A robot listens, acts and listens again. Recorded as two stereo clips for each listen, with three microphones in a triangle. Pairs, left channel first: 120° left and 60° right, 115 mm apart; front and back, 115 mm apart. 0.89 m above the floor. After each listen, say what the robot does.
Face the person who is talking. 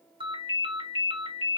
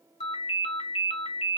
Keep listening.
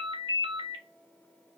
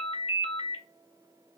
Keep listening.
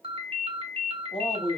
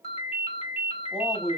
Turn 95° left.
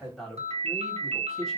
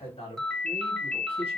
Turn 35° left.
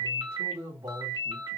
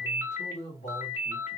Facing the man speaking, 1 to 2 m away.